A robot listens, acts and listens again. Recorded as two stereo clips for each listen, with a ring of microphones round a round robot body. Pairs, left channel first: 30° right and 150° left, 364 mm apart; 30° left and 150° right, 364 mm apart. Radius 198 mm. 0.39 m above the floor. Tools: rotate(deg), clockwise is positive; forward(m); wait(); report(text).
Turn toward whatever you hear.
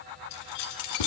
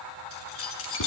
rotate(25)
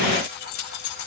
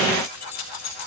rotate(20)
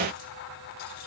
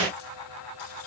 wait()
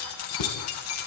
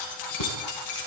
rotate(15)
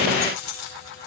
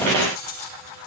report("Found it: keys jangling, straight ahead, over 4 m away.")